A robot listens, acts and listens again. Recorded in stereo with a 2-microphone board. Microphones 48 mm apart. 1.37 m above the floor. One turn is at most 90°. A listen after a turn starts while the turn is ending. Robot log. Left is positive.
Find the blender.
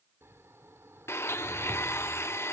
note: The blender: about 60° left or 120° left.
cmd yaw +60
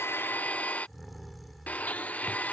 note: So it is at 40° left.
cmd yaw +40
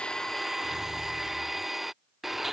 end: Facing the blender.